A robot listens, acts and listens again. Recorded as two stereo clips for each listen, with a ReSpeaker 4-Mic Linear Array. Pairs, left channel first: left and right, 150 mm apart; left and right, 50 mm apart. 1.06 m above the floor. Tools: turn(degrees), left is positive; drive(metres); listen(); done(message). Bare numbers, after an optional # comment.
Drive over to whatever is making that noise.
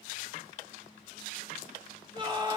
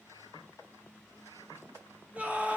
# The scream: about 30° right or 150° right.
turn(-30)
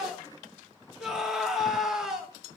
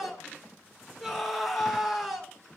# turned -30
drive(1.0)
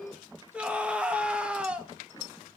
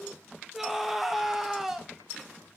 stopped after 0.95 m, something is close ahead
# The scream is now 10° right.
turn(-10)
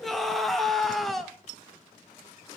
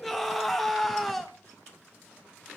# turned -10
done("Arrived at the scream, straight ahead.")